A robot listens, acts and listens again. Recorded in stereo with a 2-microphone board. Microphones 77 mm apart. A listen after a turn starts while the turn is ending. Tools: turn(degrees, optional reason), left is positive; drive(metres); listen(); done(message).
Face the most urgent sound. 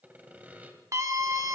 turn(degrees=-45, reason="The scream: about 45° right or 135° right.")
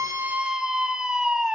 turn(degrees=-10, reason="So it is at 10° right.")
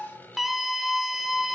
done("Facing the scream, 1 to 2 m away.")